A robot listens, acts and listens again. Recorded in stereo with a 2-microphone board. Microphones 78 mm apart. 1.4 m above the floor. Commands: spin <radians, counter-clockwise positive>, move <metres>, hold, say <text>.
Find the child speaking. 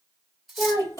spin 0.87
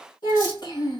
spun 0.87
spin 1.05
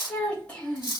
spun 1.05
spin 0.17
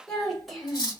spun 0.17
say Found it: a child speaking, straight ahead.